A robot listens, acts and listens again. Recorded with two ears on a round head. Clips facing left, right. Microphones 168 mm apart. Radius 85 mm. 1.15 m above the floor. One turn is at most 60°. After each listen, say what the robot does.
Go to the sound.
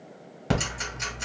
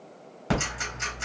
Turn 20° left.
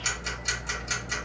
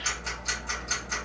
Turn 60° left.
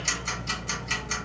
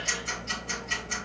Turn 60° left.
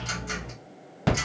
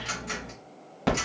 Drive 1.0 m forward.
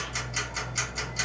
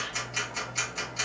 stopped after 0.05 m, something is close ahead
Turn 10° left.
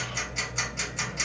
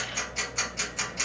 Blocked. The ticking is further on, straight ahead.